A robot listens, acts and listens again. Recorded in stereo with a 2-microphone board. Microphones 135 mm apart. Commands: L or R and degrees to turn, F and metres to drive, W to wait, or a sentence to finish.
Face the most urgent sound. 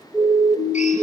L25
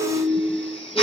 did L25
Facing the siren.